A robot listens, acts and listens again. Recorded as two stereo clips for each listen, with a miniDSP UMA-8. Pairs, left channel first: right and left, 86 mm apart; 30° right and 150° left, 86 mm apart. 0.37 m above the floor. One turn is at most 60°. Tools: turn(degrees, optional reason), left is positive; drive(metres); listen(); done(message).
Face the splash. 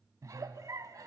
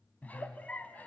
listen()
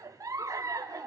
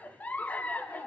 listen()
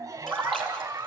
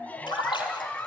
turn(degrees=-10, reason="The splash: 10° right.")
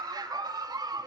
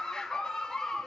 done("I heard a splash from this way, but can't make it out now.")